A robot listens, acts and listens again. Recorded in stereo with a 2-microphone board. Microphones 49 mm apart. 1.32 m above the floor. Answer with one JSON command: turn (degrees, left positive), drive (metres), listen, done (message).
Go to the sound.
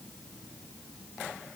{"listen": true}
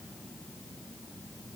{"listen": true}
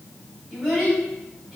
{"turn": -30}
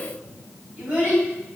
{"turn": -145}
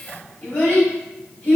{"turn": 25}
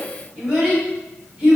{"turn": -10}
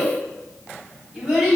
{"drive": 1.0}
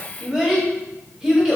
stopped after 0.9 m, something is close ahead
{"turn": -10}
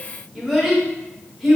{"done": "I am next to the child speaking."}